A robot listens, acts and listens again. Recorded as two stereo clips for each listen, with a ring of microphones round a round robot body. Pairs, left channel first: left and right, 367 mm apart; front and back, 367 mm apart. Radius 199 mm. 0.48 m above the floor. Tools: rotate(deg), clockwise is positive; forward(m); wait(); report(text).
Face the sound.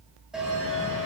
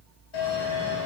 report("Found it: a bell, straight ahead.")